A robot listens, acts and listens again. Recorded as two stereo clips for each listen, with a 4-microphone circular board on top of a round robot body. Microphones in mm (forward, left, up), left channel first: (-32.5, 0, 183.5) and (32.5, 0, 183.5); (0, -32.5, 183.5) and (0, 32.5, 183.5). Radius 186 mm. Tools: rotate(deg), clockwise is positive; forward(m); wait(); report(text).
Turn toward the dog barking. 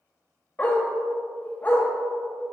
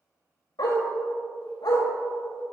rotate(110)
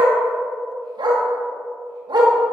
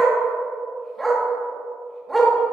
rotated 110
report("Found it: a dog barking, straight ahead, 1 to 2 m away.")